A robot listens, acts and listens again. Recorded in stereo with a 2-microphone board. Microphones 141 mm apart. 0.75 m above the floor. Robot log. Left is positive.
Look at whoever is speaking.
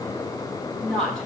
cmd yaw +30
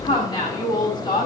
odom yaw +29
note: So it is at 150° left.
cmd yaw +150
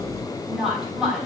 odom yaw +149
end: Found it: a woman speaking, straight ahead, over 4 m away.